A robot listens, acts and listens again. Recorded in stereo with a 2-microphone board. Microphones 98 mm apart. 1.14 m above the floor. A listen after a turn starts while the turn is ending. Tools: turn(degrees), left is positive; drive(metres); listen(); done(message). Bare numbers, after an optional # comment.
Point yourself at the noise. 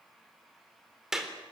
turn(-30)
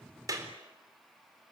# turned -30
# So it is at 145° right.
turn(-145)
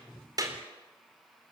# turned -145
listen()
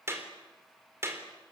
# The clap is now 25° right.
turn(-25)
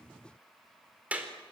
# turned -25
# The clap is now 15° right.
turn(-15)
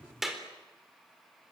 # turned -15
done("Found it: a clap, straight ahead.")